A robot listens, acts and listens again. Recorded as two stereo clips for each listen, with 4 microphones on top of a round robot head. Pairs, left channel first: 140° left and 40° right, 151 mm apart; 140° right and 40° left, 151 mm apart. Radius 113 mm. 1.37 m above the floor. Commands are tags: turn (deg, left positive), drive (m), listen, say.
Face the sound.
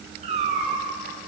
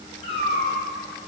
<turn deg="-90"/>
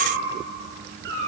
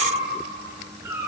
<turn deg="-35"/>
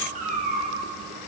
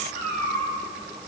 <say>Facing the cat meowing.</say>